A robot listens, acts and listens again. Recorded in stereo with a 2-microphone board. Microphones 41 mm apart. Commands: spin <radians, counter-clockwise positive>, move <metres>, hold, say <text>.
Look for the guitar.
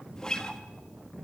spin 0.35
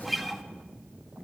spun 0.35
say Found it: a guitar, straight ahead, 1 to 2 m away.